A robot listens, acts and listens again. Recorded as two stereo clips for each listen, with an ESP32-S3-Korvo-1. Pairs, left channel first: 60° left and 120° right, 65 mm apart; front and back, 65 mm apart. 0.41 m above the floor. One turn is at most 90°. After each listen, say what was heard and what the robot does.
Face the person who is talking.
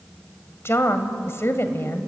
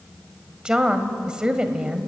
The woman speaking: 105° left. Turn 90° left.
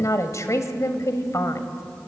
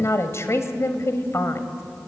The woman speaking is now 35° left. Turn 35° left.
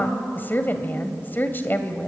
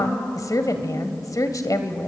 Found it: a woman speaking, straight ahead, 1 to 2 m away.